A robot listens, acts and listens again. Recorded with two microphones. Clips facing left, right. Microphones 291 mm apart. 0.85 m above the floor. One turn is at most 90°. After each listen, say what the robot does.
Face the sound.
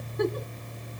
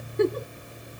Turn 35° right.
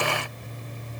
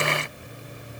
Keep listening.
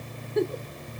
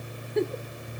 Facing the giggle.